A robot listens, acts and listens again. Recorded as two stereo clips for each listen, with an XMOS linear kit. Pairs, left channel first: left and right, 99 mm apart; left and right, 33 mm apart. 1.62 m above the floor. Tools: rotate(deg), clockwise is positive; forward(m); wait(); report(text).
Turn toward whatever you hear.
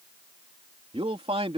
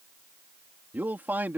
rotate(75)
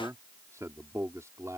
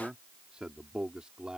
rotate(30)
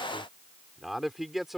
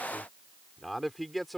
report("Found it: a man speaking, straight ahead.")